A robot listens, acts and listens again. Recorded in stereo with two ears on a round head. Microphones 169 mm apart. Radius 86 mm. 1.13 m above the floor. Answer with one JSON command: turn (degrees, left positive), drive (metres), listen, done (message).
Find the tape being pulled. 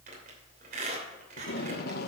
{"turn": 55}
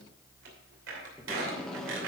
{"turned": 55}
{"done": "Found it: tape being pulled, straight ahead."}